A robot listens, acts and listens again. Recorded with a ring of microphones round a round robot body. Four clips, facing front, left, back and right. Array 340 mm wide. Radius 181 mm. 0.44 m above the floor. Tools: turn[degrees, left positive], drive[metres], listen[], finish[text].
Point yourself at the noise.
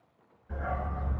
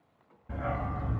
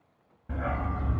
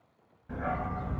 Thought: The dog barking: 175° left.
Action: turn[175]
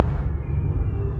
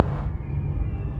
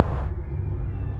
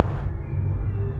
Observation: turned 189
Thought: The dog barking is now 20° left.
Action: turn[20]
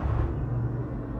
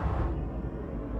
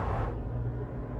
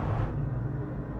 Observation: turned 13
Thought: The dog barking is now 25° left.
Action: turn[25]
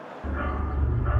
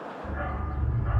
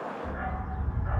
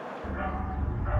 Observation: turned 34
Thought: The dog barking is now 10° left.
Action: turn[10]
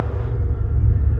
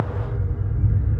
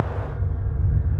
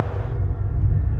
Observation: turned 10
Action: finish[Found it: a dog barking, straight ahead, 1 to 2 m away.]